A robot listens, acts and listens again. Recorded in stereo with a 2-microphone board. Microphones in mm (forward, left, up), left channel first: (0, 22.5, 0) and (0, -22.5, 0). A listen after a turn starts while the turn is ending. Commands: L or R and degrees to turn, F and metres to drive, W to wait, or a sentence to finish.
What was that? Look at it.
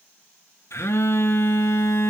L90
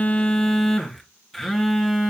Found it: a phone buzzing, straight ahead.